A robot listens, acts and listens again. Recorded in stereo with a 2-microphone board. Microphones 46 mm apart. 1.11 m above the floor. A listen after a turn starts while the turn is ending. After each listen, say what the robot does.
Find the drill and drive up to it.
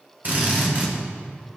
Turn 40° right.
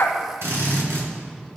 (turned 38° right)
Turn 100° right.
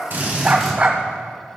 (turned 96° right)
Drive 1.0 m forward.
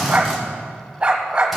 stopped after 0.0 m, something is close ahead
Blocked. The drill is further on, straight ahead.